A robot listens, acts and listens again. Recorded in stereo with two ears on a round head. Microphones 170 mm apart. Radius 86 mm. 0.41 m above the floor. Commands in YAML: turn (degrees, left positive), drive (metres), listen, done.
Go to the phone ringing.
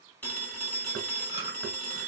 turn: 30
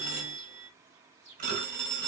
turn: -20
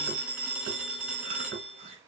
drive: 1.0
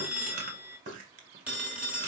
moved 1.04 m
turn: -10
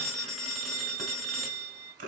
drive: 1.0
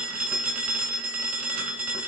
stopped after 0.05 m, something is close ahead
turn: -10
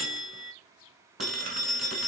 done: "I am next to the phone ringing."